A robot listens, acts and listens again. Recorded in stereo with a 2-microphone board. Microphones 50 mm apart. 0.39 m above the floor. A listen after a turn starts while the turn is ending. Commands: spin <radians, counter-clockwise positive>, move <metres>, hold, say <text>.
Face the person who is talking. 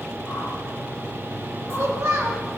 spin -1.31
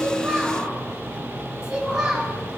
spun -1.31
spin -0.26
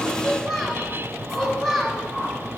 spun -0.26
say Found it: a child speaking, straight ahead, 1 to 2 m away.